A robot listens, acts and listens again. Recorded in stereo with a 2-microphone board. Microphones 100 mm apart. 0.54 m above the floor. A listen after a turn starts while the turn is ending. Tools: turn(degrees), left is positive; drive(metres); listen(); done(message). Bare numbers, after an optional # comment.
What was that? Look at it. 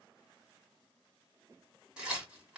turn(-30)
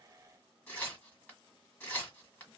# So it is at 20° left.
turn(20)
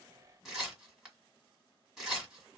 done("Facing the tearing paper, 1 to 2 m away.")